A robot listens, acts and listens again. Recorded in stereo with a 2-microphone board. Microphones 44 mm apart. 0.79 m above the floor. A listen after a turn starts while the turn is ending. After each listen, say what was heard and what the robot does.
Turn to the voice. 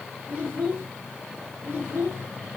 The child speaking: about 45° right or 135° right. Turn 45° right.
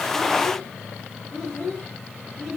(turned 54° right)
So it is at 10° left. Turn 10° left.
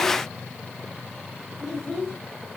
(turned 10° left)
Found it: a child speaking, straight ahead, 2 to 4 m away.